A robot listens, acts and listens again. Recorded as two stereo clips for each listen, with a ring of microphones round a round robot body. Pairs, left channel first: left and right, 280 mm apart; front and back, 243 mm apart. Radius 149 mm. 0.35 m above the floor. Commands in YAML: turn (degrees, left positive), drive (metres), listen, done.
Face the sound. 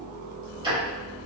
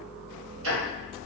turn: -160
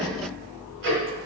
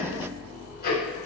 turn: -50
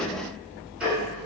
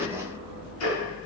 done: "Found it: ticking, straight ahead."